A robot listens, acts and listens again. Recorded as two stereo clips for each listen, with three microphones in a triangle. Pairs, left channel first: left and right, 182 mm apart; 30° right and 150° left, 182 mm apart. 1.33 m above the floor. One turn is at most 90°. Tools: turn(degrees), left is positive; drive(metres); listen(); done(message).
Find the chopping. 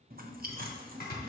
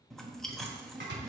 turn(degrees=90)
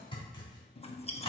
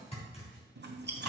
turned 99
turn(degrees=25)
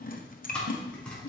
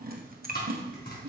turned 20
done("Facing the chopping, 2 to 4 m away.")